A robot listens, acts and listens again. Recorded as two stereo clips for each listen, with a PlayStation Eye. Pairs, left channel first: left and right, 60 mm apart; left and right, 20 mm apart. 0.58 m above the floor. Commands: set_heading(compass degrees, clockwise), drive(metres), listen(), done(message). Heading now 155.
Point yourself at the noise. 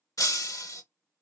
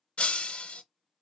set_heading(80)
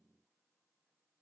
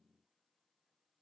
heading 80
listen()
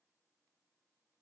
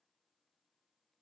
done("I heard breaking glass, but can't make it out now. It was about straight ahead or 30° left.")